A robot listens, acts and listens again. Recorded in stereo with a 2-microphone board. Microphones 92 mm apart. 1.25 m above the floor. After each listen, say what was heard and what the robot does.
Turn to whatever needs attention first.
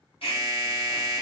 Turn 90° left.
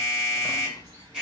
So it is at 15° right. Turn 15° right.
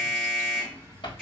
Facing the alarm, 2 to 4 m away.